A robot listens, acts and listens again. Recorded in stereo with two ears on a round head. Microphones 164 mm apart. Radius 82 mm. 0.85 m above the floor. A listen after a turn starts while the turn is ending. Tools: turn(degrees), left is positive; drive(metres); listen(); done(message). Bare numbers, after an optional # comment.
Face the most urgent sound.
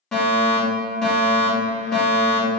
turn(30)
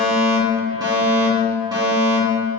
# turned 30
# So it is at 25° right.
turn(-25)
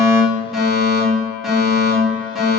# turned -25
done("Facing the fire alarm.")